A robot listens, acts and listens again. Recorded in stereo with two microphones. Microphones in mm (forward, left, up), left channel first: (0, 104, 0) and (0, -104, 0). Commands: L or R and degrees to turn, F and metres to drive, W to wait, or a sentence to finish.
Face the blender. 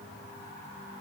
W
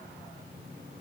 W
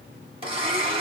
R25
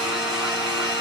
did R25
Facing the blender, 2 to 4 m away.